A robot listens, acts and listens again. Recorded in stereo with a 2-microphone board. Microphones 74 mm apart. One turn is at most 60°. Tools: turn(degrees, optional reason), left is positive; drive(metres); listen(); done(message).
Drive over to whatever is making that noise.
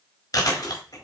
turn(degrees=60, reason="The chewing: about 60° left or 120° left.")
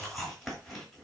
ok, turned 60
drive(metres=1.0)
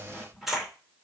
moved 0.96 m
drive(metres=1.0)
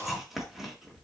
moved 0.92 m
drive(metres=1.0)
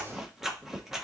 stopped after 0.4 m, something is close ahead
done("I am next to the chewing.")